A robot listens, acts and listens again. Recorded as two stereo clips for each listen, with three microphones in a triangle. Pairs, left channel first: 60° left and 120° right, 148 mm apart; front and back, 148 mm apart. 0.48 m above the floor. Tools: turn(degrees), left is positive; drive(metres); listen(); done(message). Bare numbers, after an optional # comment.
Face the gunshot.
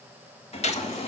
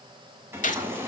# The gunshot: 25° left.
turn(25)
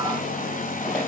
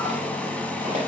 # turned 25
done("I heard a gunshot from this way, but can't make it out now.")